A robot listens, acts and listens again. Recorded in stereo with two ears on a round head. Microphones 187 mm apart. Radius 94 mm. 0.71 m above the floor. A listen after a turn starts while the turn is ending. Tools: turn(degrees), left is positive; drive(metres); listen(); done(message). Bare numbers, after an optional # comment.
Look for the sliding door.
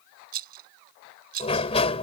# The sliding door: about 30° left or 150° left.
turn(30)
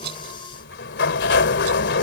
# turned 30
# So it is at 120° left.
turn(120)
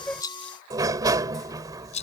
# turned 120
# The sliding door is now 20° right.
turn(-20)
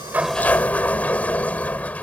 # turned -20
done("Facing the sliding door.")